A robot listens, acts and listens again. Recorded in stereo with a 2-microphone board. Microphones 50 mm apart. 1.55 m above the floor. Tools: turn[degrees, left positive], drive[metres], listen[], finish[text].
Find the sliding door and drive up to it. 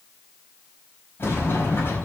Thought: The sliding door: about 50° left or 130° left.
Action: turn[50]
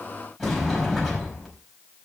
Action: drive[1.0]
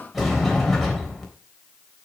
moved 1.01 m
Action: drive[1.0]
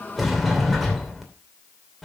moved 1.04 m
Action: drive[1.0]
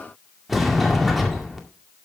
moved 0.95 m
Action: drive[1.0]
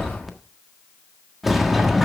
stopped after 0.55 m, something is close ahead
Action: finish[Arrived at the sliding door, straight ahead.]